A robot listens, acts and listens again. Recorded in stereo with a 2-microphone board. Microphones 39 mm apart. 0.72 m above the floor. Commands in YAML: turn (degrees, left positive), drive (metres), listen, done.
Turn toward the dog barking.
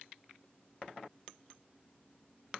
listen: true
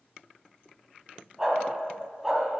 turn: -30
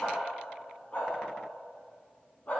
turn: 40
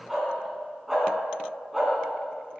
done: "Found it: a dog barking, straight ahead, 2 to 4 m away."